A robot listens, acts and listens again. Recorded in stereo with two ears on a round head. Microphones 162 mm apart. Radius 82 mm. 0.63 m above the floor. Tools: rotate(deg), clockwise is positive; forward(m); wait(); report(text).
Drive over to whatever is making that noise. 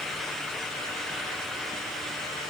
wait()
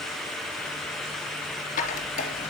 rotate(-40)
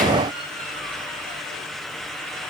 wait()
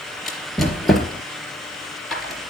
forward(1.0)
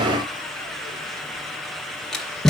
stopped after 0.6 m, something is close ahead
report("Something is in my way. I am facing the squeak but have not reached it.")